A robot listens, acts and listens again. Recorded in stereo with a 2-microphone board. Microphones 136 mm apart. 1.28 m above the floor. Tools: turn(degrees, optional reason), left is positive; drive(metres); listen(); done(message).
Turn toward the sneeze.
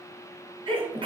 turn(degrees=-40, reason="The sneeze: about 40° right or 140° right.")
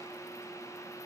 listen()
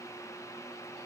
done("I heard a sneeze, but can't make it out now. It was about straight ahead or 100° right.")